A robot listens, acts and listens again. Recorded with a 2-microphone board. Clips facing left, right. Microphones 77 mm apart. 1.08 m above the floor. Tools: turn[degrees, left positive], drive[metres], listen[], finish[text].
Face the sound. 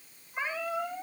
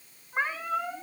Thought: The cat meowing: about 45° right or 135° right.
Action: turn[-45]
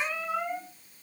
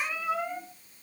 Action: finish[Facing the cat meowing.]